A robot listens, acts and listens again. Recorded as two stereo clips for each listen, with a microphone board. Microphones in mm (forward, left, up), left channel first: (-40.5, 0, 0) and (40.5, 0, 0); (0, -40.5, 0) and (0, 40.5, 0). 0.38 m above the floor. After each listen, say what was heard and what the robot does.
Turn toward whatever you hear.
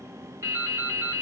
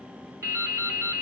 The dripping: 45° left. Turn 45° left.
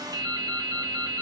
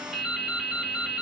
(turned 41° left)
Facing the dripping.